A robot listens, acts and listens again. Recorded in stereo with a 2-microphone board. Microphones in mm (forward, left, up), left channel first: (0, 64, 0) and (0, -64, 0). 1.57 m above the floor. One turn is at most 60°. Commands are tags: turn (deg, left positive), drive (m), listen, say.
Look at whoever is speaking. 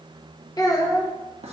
<turn deg="30"/>
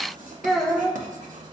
<say>Facing the child speaking, under 1 m away.</say>